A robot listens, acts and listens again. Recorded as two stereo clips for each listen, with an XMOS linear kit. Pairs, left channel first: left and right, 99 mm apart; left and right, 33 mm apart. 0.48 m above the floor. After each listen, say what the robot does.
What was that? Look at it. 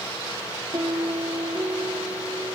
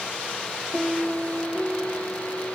Turn 35° right.
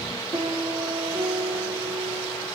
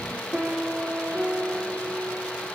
Turn 110° right.
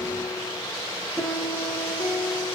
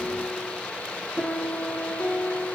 Facing the piano.